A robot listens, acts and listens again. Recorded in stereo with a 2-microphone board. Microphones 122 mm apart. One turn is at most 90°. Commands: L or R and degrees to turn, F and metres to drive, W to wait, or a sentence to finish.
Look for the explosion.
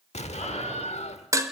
L60
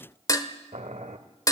W
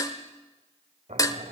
I heard an explosion, but can't make it out now. It was about straight ahead or 60° left.